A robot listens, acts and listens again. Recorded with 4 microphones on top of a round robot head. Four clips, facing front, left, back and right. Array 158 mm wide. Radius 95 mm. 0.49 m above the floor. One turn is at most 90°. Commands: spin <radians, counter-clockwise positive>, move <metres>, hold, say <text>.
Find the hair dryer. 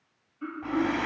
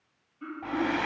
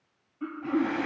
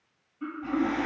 spin 1.31
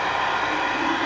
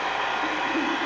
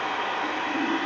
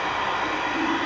say Facing the hair dryer, 1 to 2 m away.